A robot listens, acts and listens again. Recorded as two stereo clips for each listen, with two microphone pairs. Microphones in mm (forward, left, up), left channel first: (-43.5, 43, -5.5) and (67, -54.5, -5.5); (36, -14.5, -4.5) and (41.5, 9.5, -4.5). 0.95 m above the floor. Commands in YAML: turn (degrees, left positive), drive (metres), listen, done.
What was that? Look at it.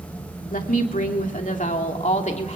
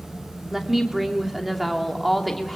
turn: 175
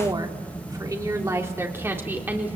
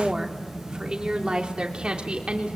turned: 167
turn: 35
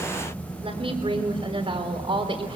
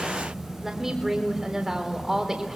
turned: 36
turn: 10
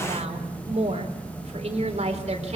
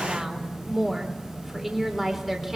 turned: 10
done: "Found it: a woman speaking, straight ahead."